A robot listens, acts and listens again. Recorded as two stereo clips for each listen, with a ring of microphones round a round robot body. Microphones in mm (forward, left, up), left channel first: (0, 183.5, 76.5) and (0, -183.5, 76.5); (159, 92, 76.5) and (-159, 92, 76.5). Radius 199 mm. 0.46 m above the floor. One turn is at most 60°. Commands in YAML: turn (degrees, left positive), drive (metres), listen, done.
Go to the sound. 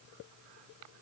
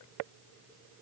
listen: true
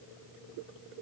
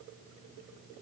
listen: true
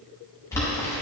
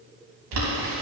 turn: 60
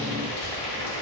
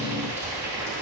turn: 60
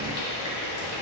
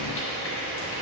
turn: 45
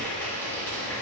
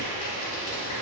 drive: 1.0
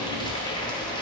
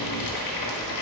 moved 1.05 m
turn: 10
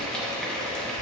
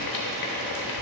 drive: 1.0
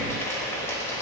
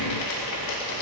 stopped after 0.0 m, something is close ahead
done: "I am next to the boiling."